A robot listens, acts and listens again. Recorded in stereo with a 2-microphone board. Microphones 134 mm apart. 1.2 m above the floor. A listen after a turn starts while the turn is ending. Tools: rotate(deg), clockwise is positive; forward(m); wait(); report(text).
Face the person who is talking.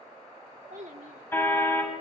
rotate(70)
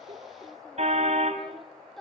report("Facing the child speaking, 2 to 4 m away.")